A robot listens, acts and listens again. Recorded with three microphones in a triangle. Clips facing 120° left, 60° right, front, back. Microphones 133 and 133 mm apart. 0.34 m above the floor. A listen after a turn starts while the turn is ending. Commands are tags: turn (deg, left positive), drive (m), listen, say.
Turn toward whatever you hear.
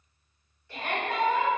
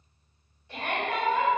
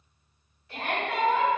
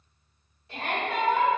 <turn deg="-125"/>
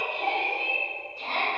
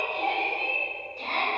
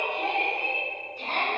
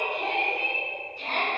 <turn deg="-35"/>
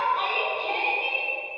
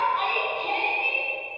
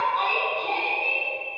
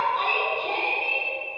<say>Found it: a shout, straight ahead.</say>